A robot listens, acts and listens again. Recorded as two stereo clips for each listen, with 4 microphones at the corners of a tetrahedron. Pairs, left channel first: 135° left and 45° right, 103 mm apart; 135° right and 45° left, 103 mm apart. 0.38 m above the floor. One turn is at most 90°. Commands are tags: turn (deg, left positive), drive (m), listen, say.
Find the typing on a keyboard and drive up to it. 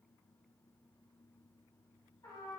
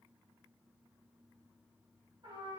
<listen/>
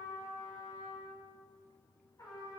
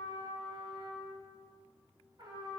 <listen/>
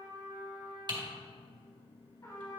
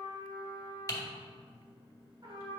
<turn deg="-80"/>
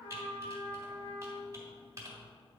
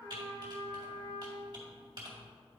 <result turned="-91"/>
<turn deg="10"/>
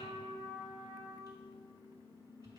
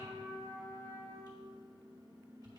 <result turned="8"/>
<listen/>
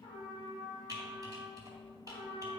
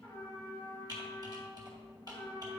<drive m="1.0"/>
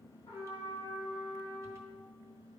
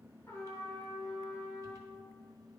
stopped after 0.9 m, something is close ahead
<listen/>
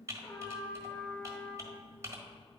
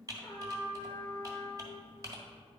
<say>Arrived at the typing on a keyboard, straight ahead.</say>